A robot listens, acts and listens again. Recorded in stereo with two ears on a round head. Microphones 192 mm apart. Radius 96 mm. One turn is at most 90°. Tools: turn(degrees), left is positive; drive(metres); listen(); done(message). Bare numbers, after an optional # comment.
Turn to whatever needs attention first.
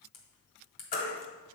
# The baby crying: about 40° left or 140° left.
turn(40)
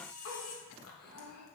listen()
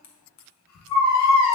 # So it is at 100° left.
turn(90)
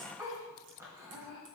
# The baby crying is now 15° right.
turn(-15)
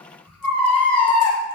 done("Facing the baby crying, 1 to 2 m away.")